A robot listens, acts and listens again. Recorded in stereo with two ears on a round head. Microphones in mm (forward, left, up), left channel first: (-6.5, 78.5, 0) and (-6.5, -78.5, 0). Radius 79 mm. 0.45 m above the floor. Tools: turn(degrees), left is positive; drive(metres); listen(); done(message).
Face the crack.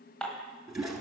listen()
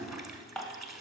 listen()
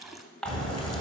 turn(degrees=35)
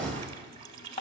turn(degrees=10)
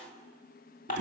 done("Facing where the crack came from. I can't hear it now.")